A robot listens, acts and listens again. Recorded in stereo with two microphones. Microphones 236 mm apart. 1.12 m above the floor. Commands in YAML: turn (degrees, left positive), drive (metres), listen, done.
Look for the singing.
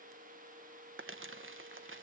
listen: true
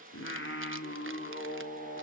turn: 45
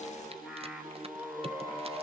turn: -10
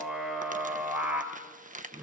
done: "Found it: singing, straight ahead, 2 to 4 m away."